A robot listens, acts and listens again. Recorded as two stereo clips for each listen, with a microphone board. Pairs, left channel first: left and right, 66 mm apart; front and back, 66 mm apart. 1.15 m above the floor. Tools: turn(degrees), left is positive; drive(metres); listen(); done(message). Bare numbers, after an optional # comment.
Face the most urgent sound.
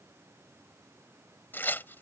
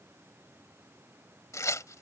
listen()
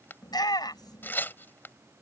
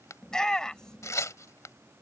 # The shout: 80° left.
turn(80)
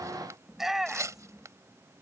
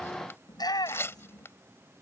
done("Facing the shout.")